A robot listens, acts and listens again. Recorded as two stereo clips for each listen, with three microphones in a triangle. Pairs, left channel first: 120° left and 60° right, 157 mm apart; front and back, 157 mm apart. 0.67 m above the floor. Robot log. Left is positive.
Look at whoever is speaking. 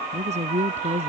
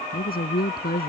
note: The woman speaking: 15° right.
cmd yaw -15
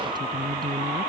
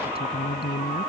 cmd idle
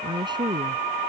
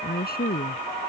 end: Facing the woman speaking.